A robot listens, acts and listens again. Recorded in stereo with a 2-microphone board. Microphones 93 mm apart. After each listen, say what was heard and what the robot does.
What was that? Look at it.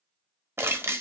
The crushing: about 30° right or 150° right. Turn 30° right.
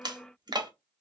So it is at 120° right. Turn 120° right.
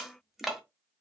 Found it: crushing, straight ahead.